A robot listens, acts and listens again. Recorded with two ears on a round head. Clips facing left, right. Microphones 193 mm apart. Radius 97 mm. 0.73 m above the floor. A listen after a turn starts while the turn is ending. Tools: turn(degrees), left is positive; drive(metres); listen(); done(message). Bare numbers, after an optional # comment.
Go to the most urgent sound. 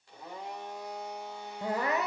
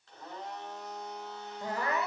# The crying: about 20° left or 160° left.
turn(20)
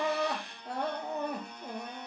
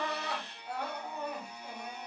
# So it is at 145° left.
turn(145)
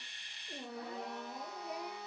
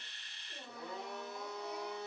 # The crying is now 55° left.
turn(55)
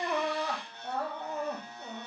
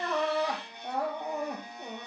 # The crying is now 15° right.
turn(-15)
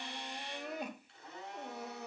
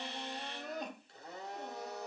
drive(1.0)
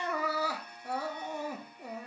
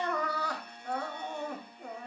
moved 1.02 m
drive(1.0)
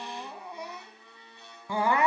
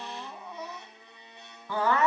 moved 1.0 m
# The crying is now 15° left.
turn(15)
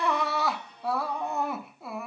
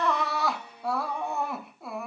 drive(1.0)
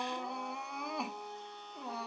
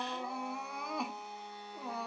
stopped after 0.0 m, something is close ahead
done("Arrived at the crying, straight ahead.")